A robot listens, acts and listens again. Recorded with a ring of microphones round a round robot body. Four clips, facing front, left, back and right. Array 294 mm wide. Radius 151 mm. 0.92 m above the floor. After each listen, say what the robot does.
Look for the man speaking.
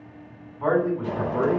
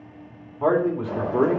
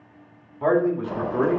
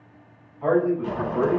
Turn 110° left.
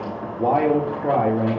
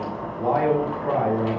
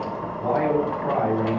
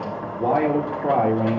Turn 55° right.
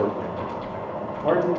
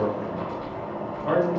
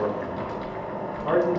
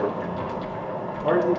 Turn 40° right.
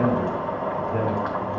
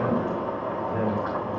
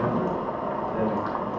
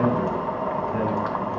Keep listening.
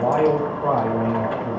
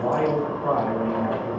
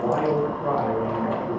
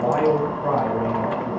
Turn 10° right.
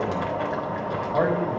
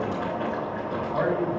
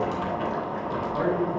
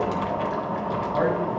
Keep listening.
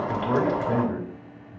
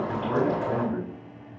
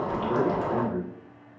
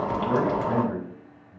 Found it: a man speaking, straight ahead.